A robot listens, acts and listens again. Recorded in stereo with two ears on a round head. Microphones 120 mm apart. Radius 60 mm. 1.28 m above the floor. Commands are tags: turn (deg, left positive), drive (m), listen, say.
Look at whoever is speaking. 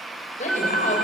<turn deg="55"/>
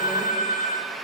<listen/>
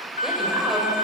<listen/>
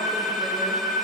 <say>I heard a woman speaking, but can't make it out now. It was about straight ahead or 70° left.</say>